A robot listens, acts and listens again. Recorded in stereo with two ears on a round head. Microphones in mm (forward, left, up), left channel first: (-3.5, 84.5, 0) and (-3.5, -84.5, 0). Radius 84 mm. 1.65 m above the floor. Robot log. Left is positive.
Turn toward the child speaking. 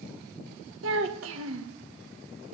cmd yaw -90
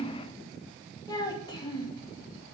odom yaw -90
note: So it is at 25° left.
cmd yaw +25
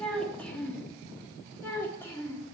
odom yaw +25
note: The child speaking is now 10° left.
cmd yaw +10
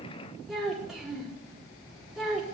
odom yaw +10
end: Found it: a child speaking, straight ahead.